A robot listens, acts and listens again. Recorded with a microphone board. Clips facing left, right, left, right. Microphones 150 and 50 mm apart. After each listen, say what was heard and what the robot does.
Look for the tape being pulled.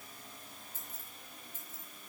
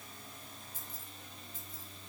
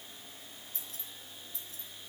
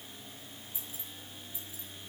Keep listening.
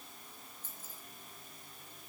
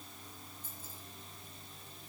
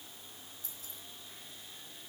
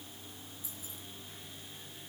Keep listening.
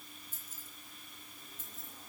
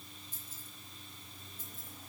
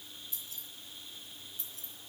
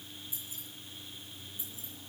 I can't make out tape being pulled, only keys jangling.